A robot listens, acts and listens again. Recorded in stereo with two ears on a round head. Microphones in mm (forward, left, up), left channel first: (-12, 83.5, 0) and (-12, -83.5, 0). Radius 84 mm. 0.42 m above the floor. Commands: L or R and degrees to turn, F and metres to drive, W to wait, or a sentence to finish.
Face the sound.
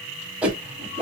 R30
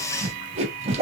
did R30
R140
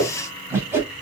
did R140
R15
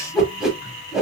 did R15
Facing the whoosh, 1 to 2 m away.